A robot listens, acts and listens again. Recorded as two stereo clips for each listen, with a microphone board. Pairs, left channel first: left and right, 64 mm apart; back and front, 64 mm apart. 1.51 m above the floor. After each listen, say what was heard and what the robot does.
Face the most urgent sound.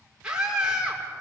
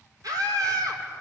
The scream: 15° right. Turn 15° right.
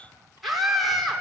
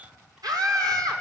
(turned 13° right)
Found it: a scream, straight ahead, over 4 m away.